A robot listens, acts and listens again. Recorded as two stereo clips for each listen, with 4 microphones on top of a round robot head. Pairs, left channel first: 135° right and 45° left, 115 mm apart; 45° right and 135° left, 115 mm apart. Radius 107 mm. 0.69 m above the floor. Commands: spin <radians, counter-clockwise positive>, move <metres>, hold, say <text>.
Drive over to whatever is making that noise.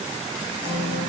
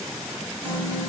spin 2.97
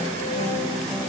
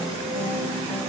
spin -0.17
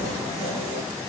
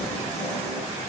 hold
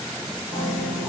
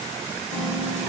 move 1.0
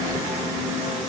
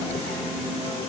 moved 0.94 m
move 1.0
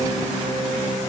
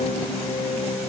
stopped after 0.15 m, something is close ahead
spin -0.17
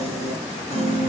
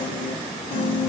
say Arrived at the piano, straight ahead.